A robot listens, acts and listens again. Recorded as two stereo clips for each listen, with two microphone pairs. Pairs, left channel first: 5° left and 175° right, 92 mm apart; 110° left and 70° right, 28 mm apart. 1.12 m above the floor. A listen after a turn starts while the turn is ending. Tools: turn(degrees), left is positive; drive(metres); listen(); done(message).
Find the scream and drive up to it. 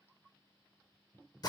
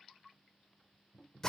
listen()
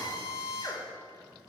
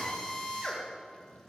listen()
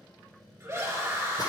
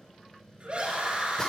turn(degrees=-115)
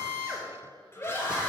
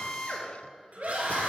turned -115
turn(degrees=-50)
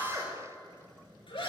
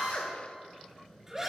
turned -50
drive(metres=1.0)
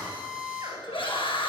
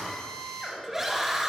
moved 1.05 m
turn(degrees=10)
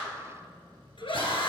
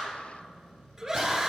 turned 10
drive(metres=1.0)
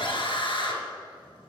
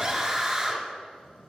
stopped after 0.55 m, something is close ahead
done("Arrived at the scream, straight ahead.")